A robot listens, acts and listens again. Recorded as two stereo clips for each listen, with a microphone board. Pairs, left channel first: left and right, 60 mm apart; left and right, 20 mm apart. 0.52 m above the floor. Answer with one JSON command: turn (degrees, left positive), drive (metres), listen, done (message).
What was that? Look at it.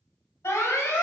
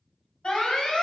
{"turn": 55}
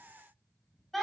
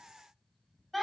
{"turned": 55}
{"done": "Found it: an alarm, straight ahead, 1 to 2 m away."}